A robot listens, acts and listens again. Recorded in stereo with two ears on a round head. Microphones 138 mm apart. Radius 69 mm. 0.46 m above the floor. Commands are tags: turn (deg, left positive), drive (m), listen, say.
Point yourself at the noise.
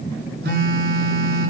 <turn deg="-65"/>
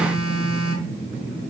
<say>Found it: a phone buzzing, straight ahead.</say>